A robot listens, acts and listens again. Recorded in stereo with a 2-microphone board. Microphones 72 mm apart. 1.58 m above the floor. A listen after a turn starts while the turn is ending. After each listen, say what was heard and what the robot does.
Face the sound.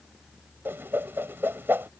The whoosh: about 30° right or 150° right. Turn 30° right.
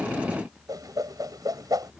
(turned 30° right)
So it is at 120° right. Turn 120° right.
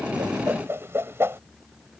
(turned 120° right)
The whoosh is now 35° right. Turn 35° right.
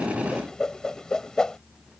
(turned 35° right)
The whoosh is now 10° left. Turn 10° left.
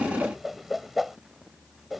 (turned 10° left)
Facing the whoosh.